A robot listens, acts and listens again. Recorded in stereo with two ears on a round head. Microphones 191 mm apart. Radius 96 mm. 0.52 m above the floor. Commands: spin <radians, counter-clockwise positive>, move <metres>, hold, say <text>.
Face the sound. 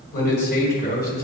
spin 0.79
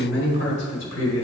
spin 1.31
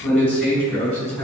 say Facing the man speaking, over 4 m away.